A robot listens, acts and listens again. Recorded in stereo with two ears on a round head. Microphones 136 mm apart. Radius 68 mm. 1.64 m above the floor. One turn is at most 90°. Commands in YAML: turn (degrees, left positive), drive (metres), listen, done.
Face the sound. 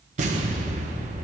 turn: -50
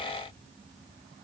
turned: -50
listen: true
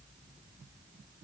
done: "I heard an explosion, but can't make it out now. It was about straight ahead or 80° right."